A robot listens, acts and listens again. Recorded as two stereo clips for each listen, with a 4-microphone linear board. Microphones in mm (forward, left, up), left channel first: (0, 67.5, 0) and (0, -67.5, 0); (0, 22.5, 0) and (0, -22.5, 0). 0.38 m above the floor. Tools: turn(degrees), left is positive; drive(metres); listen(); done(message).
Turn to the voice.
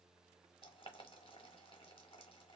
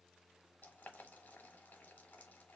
listen()
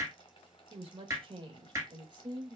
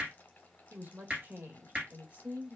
turn(degrees=-30)
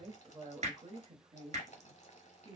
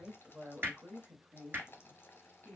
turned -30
turn(degrees=-40)
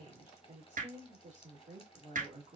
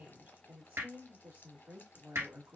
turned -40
turn(degrees=-115)
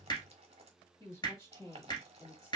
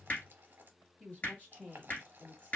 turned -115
turn(degrees=25)
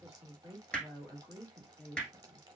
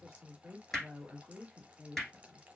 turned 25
done("Facing the woman speaking.")